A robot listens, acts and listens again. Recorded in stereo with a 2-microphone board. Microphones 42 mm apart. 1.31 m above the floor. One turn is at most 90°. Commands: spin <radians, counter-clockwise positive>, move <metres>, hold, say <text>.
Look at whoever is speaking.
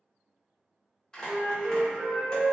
hold
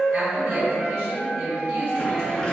spin -1.05
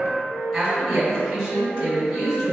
say Found it: a woman speaking, straight ahead.